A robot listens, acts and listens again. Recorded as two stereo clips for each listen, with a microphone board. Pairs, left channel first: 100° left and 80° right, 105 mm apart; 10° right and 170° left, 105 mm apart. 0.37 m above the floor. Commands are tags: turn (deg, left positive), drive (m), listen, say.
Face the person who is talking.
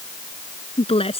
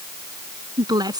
<turn deg="120"/>
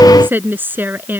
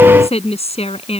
<turn deg="-10"/>
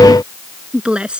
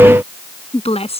<say>Found it: a woman speaking, straight ahead.</say>